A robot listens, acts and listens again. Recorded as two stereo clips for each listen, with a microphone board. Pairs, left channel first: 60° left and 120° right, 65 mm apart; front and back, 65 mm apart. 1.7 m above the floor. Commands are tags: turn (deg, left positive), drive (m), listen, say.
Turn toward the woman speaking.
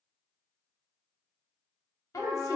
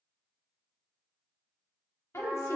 <turn deg="35"/>
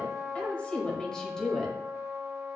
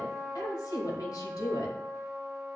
<turn deg="-25"/>
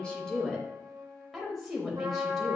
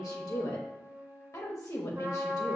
<turn deg="-30"/>
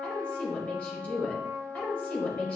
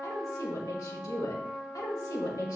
<turn deg="-10"/>
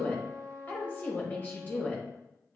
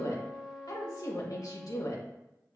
<say>Found it: a woman speaking, straight ahead.</say>